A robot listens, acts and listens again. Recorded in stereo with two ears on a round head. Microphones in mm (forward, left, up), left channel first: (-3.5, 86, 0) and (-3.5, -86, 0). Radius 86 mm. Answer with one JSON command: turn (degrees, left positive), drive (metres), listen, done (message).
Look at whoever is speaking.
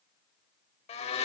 {"listen": true}
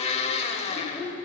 {"turn": 30}
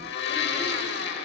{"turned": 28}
{"listen": true}
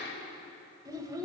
{"turn": -20}
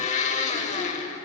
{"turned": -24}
{"listen": true}
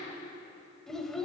{"done": "Facing the child speaking."}